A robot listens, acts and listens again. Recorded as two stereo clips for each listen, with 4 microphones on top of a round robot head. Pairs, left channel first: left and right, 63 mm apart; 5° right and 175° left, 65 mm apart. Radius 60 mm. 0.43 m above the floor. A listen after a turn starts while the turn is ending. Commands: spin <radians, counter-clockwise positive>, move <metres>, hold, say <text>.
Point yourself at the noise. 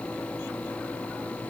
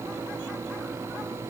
hold
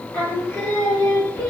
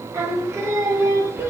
spin 2.27
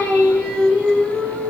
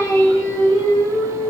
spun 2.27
spin -0.26
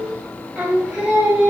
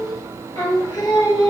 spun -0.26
spin -0.26
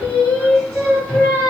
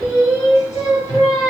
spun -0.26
say Found it: singing, straight ahead, 2 to 4 m away.